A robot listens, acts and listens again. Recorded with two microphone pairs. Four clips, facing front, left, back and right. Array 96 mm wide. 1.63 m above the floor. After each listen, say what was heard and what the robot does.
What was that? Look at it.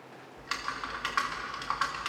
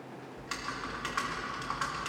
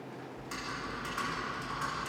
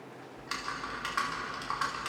The typing on a keyboard: 10° right. Turn 10° right.
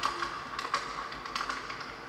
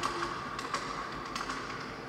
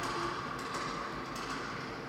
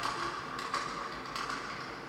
Found it: typing on a keyboard, straight ahead, 2 to 4 m away.